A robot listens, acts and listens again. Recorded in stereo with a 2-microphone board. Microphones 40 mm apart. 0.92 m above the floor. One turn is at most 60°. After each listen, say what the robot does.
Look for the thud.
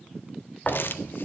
Turn 35° left.
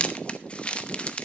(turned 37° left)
Keep listening.
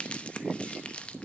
I heard a thud, but can't make it out now. It was about straight ahead or 105° left.